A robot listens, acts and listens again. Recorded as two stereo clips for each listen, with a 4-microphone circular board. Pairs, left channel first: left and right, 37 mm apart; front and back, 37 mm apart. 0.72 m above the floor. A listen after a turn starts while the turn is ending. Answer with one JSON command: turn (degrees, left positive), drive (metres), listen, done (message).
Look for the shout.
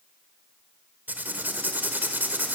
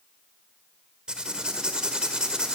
{"listen": true}
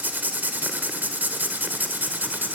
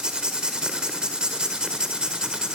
{"listen": true}
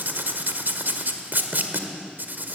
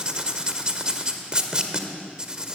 {"done": "I can't make out a shout, only writing."}